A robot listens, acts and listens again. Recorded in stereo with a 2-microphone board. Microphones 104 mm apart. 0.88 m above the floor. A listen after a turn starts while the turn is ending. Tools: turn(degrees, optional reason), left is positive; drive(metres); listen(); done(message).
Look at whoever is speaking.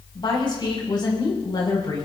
turn(degrees=45, reason="The woman speaking: about 45° left or 135° left.")
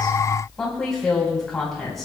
done("Found it: a woman speaking, straight ahead.")